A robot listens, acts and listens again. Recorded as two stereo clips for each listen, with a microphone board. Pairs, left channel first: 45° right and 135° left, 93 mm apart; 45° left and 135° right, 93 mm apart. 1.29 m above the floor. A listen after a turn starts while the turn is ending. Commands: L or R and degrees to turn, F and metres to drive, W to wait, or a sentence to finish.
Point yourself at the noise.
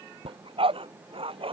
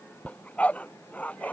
L120
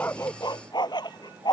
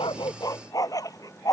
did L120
Found it: a dog barking, straight ahead.